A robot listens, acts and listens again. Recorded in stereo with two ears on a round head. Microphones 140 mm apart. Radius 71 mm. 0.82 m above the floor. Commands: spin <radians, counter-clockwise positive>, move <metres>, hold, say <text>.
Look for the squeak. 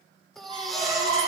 spin -0.61
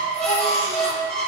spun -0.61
say Facing the squeak, over 4 m away.